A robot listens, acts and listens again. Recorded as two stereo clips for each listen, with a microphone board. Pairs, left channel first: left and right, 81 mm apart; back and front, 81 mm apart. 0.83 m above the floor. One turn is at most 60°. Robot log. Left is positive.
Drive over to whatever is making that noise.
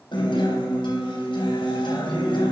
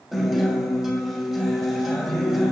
note: The guitar: 85° left.
cmd yaw +60
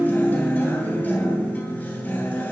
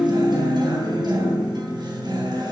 note: The guitar is now 20° left.
cmd yaw +20
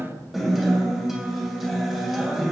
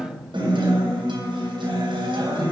cmd fwd 1.0
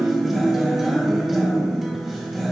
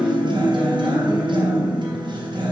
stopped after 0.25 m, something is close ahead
end: Blocked. The guitar is further on, straight ahead.